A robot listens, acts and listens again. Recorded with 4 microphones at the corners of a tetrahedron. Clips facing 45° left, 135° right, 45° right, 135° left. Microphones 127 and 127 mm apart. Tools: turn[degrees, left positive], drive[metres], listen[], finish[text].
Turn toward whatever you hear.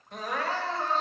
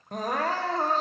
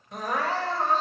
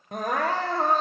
Thought: The crying: 175° left.
Action: turn[175]
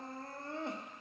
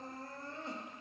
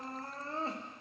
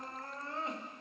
Thought: The crying is now 15° left.
Action: turn[15]
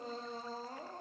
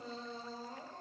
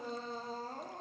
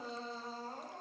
Action: finish[Facing the crying.]